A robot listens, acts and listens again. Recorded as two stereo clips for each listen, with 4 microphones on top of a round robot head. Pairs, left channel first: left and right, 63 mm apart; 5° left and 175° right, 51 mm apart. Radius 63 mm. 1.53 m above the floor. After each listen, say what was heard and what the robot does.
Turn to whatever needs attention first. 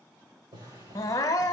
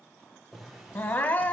The crying: 55° left. Turn 55° left.
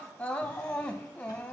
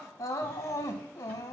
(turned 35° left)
The crying is now 15° left. Turn 15° left.
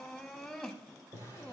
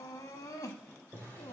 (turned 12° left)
Found it: crying, straight ahead.